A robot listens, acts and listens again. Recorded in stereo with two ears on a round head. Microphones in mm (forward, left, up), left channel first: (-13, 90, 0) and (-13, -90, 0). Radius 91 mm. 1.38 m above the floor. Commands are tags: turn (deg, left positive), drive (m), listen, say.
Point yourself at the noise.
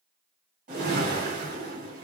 <turn deg="-45"/>
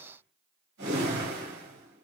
<turn deg="-85"/>
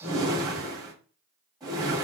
<turn deg="-20"/>
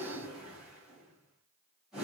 <say>Found it: a whoosh, straight ahead.</say>